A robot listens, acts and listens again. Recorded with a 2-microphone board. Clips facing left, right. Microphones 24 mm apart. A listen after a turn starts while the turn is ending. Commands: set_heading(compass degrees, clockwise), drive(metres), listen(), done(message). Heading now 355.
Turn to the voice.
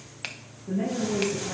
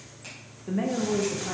set_heading(45)
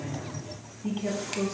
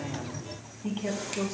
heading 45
done("Facing the woman speaking.")